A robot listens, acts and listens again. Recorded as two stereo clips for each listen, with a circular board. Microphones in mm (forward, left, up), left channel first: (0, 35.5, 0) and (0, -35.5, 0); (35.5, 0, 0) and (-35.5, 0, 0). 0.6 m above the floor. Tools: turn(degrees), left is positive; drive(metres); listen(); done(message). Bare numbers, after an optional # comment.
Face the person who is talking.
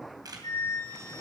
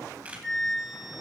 listen()
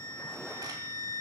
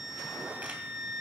listen()
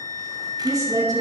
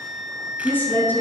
# The woman speaking: 60° right.
turn(-60)
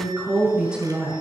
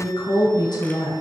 # The woman speaking is now 10° right.
turn(-10)
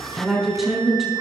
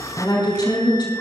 done("Found it: a woman speaking, straight ahead, over 4 m away.")